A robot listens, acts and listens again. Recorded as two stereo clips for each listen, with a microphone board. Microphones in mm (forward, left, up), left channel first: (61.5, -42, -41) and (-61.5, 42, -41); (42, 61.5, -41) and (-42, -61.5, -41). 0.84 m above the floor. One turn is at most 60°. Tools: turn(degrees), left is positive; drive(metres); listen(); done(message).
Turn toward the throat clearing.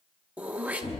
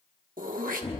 turn(degrees=-60)
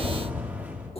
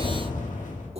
turn(degrees=-60)
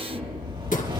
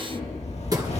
turn(degrees=-60)
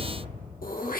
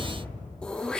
turn(degrees=-25)
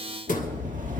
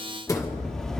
turn(degrees=-10)
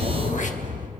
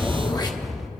listen()
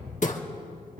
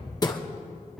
done("Found it: throat clearing, straight ahead, 1 to 2 m away.")